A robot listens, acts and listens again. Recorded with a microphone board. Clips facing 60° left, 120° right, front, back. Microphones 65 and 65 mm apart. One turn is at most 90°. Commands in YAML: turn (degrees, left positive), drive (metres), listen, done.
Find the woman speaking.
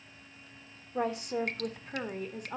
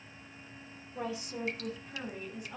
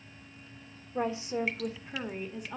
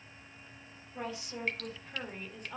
turn: 80
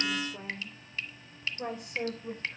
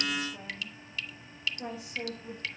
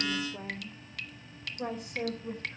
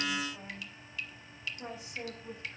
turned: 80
turn: 30
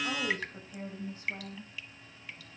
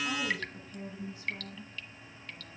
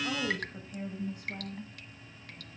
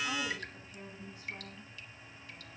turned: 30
turn: 15
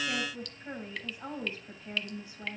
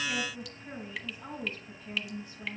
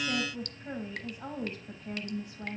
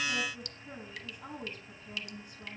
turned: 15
done: "Found it: a woman speaking, straight ahead, 2 to 4 m away."